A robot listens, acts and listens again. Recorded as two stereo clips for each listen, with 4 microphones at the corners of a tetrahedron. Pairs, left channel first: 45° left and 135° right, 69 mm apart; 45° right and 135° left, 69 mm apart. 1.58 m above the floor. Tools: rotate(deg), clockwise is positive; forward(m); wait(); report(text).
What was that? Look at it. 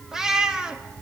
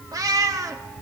rotate(-150)
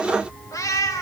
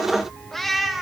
rotate(-50)
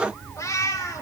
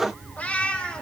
rotate(-30)
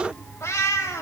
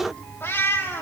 rotate(-10)
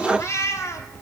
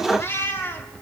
rotate(-10)
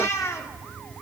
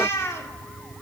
report("Facing the cat meowing, 2 to 4 m away.")